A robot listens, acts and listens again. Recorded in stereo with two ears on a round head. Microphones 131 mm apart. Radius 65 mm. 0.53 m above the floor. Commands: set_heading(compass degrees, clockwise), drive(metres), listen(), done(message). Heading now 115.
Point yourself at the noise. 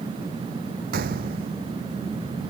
set_heading(190)
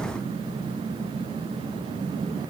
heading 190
listen()
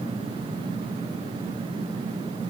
done("I heard a gunshot, but can't make it out now. It was about straight ahead or 30° right.")